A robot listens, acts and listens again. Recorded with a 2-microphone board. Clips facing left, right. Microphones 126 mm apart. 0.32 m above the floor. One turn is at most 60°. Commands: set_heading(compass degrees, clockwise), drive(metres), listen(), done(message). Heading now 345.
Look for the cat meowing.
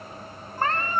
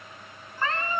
set_heading(295)
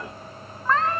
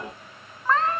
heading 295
done("Found it: a cat meowing, straight ahead, 2 to 4 m away.")